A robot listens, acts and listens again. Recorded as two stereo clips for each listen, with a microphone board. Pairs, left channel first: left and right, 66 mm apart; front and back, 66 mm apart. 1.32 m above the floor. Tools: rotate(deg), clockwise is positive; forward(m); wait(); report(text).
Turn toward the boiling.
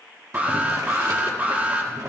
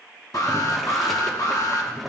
rotate(90)
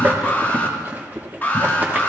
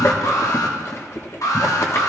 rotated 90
rotate(35)
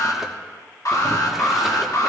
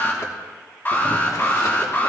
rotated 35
wait()
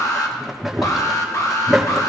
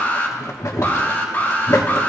report("Found it: boiling, straight ahead, 1 to 2 m away.")